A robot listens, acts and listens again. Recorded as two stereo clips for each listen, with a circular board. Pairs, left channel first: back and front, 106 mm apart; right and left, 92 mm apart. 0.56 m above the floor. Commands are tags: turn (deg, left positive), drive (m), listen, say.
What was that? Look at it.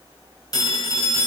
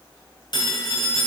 <turn deg="-130"/>
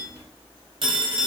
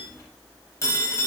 <turn deg="-35"/>
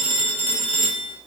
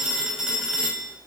<say>Facing the phone ringing.</say>